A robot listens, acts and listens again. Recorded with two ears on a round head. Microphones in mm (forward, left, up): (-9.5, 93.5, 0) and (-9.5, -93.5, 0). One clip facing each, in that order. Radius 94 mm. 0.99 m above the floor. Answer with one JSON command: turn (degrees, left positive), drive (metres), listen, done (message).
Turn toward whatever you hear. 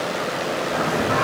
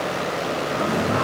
{"turn": 90}
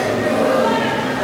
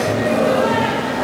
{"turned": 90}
{"turn": 15}
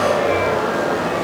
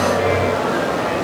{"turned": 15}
{"turn": 10}
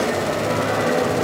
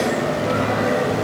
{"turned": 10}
{"done": "Found it: singing, straight ahead."}